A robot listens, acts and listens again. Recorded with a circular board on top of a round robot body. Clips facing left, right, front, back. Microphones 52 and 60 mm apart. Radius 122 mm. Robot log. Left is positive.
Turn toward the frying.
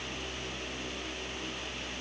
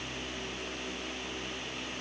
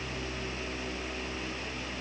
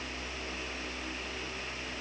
cmd idle
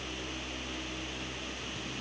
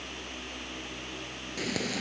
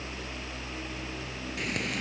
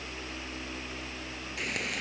note: The frying: 90° right.
cmd yaw -90
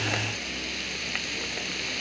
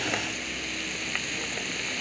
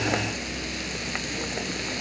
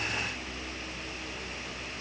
end: Facing the frying.